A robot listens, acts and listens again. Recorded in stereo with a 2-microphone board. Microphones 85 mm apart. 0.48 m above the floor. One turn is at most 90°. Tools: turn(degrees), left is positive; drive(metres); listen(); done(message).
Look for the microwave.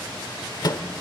turn(degrees=55)
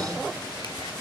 listen()
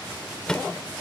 turn(degrees=10)
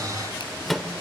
done("Facing the microwave.")